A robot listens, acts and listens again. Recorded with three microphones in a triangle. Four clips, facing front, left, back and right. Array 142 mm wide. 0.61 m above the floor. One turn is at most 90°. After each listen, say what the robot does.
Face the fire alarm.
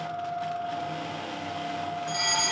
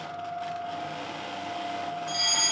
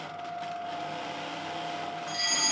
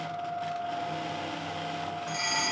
Turn 10° right.
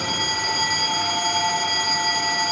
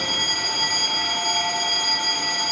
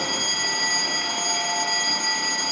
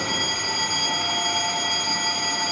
Found it: a fire alarm, straight ahead, 2 to 4 m away.